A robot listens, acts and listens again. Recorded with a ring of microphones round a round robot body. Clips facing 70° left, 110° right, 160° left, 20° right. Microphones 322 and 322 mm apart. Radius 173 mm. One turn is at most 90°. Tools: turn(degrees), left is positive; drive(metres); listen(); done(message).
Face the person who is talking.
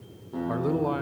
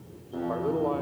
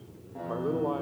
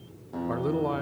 turn(degrees=20)
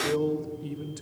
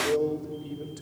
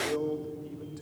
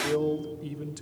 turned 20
done("Found it: a man speaking, straight ahead.")